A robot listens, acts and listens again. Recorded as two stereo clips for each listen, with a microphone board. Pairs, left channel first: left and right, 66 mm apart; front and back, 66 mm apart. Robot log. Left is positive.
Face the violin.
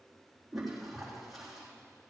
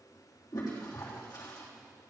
cmd idle
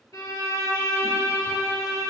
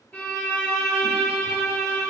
note: The violin: 65° left.
cmd yaw +65
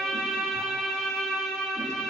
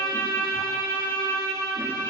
note: The violin is now 10° left.
cmd yaw +10
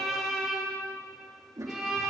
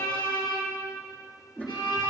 end: Facing the violin, 2 to 4 m away.